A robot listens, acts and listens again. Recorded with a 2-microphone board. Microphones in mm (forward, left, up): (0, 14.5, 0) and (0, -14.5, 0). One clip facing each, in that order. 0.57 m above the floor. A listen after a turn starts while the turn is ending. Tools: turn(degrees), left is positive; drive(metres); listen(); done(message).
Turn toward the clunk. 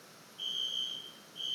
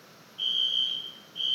listen()
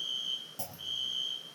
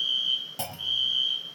turn(degrees=-90)
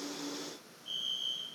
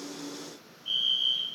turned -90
done("Facing where the clunk came from. I can't hear it now.")